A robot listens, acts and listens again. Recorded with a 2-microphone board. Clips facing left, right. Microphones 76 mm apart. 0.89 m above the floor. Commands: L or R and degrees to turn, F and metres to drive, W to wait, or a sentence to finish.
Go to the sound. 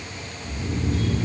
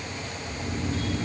L90
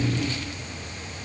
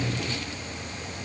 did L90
W
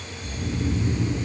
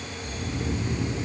F1.0
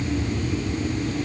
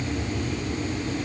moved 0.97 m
F1.0
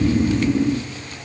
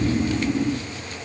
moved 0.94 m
L15
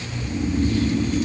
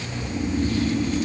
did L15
F1.0
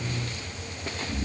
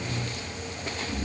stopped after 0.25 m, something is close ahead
I am next to the snoring.